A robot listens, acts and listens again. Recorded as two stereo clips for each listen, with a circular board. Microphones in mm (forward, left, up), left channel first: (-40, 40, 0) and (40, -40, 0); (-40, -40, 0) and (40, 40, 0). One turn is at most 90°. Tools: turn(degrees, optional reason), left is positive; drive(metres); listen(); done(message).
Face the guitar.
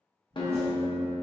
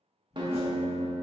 turn(degrees=90, reason="The guitar: 90° left.")
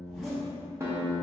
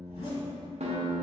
turn(degrees=20, reason="The guitar is now 20° left.")
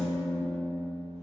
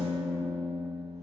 done("Found it: a guitar, straight ahead, under 1 m away.")